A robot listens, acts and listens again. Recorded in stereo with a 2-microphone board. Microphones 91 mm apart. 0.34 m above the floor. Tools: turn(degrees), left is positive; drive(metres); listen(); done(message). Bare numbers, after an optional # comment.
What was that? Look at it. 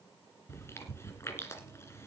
# The chewing: about 30° left or 150° left.
turn(30)
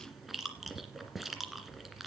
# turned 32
done("Found it: chewing, straight ahead.")